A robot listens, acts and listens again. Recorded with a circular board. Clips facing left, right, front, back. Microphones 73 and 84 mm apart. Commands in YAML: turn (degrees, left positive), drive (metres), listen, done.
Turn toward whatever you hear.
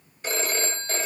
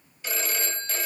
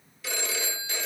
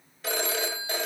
turn: 140
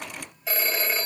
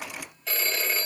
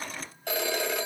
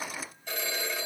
turn: 10
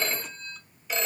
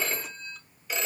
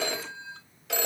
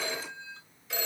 done: "Found it: a phone ringing, straight ahead."